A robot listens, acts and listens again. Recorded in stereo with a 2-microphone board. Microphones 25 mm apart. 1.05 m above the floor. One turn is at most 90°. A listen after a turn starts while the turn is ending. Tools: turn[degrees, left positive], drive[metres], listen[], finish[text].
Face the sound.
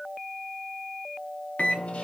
Thought: The microwave: about 65° left or 115° left.
Action: turn[65]
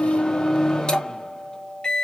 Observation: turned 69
Thought: So it is at 40° left.
Action: turn[40]
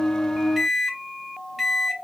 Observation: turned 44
Action: finish[Found it: a microwave, straight ahead, under 1 m away.]